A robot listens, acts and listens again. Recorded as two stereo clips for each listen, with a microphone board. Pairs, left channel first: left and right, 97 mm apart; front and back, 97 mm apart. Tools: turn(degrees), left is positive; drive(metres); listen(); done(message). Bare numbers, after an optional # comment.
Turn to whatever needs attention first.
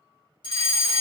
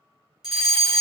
# The fire alarm: 95° left.
turn(95)
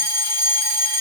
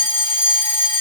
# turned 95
# The fire alarm is now 20° right.
turn(-20)
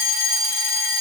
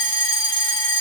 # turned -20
done("Found it: a fire alarm, straight ahead, 2 to 4 m away.")